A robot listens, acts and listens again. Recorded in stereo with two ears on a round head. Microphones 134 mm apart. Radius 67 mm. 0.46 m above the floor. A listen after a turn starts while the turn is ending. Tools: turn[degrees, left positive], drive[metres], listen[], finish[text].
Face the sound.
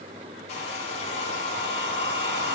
Thought: The hair dryer: about 45° left or 135° left.
Action: turn[45]
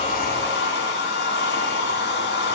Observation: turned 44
Thought: So it is at 90° left.
Action: turn[90]
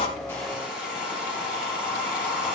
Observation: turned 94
Action: finish[Found it: a hair dryer, straight ahead, over 4 m away.]